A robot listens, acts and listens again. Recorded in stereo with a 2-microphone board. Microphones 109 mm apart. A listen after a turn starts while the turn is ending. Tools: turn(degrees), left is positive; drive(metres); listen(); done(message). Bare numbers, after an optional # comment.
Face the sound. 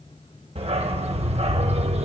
# The dog barking: about 70° right or 110° right.
turn(-70)
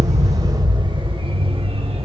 # So it is at 60° right.
turn(-60)
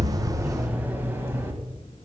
# The dog barking is now 25° right.
turn(-25)
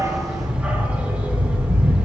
# The dog barking is now 10° right.
turn(-10)
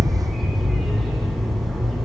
done("Facing the dog barking.")